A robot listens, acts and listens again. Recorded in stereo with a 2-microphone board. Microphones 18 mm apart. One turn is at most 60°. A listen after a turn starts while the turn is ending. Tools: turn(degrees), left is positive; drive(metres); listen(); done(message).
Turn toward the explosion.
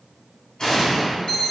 turn(degrees=40)
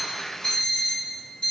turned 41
listen()
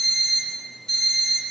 done("I heard an explosion, but can't make it out now. It was about straight ahead or 100° left.")